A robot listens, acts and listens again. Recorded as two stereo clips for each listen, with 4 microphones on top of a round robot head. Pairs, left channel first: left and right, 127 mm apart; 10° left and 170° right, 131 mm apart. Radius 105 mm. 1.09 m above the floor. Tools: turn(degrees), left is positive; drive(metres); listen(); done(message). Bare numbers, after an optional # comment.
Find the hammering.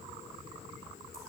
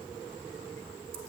listen()
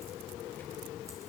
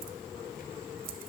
listen()
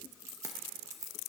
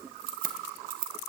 done("I can't make out hammering, only keys jangling.")